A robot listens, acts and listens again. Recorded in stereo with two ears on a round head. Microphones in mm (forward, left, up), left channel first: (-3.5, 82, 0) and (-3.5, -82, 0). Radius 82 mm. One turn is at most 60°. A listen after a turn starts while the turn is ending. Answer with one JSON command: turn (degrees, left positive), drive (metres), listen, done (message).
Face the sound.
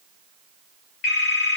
{"turn": 55}
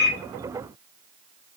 {"listen": true}
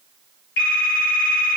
{"turn": 60}
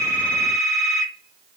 {"done": "Facing the phone ringing."}